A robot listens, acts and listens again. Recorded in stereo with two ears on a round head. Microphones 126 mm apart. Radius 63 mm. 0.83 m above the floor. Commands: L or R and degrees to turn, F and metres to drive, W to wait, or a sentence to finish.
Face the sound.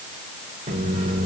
R35
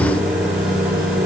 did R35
Found it: a microwave, straight ahead.